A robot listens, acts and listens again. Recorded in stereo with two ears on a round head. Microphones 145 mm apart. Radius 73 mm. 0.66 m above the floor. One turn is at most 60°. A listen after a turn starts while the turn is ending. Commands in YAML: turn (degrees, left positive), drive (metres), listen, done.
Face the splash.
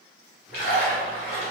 turn: 55
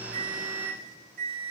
listen: true
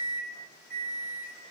done: "I heard a splash, but can't make it out now. It was about straight ahead or 70° left."